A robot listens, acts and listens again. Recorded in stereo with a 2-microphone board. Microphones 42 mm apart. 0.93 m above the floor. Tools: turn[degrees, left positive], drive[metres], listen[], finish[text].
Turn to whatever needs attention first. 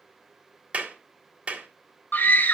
Thought: The scream: about 50° left or 130° left.
Action: turn[50]
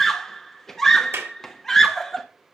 Thought: So it is at 10° left.
Action: turn[10]
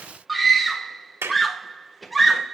Action: finish[Facing the scream.]